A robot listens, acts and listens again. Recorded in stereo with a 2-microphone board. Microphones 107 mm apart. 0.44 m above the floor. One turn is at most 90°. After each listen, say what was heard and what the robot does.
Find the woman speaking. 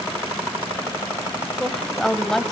Turn 30° left.
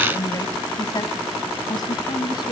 So it is at 140° left. Turn 90° left.
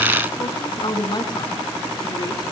The woman speaking is now 45° left. Turn 45° left.
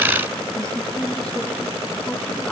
The woman speaking is now 10° left. Turn 10° left.
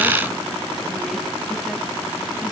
Keep listening.
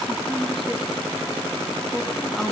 Facing the woman speaking, over 4 m away.